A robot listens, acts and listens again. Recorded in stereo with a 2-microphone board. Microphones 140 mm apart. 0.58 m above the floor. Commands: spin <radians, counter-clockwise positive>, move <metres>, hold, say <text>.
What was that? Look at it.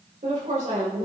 spin -0.96
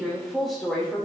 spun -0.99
say Found it: a woman speaking, straight ahead.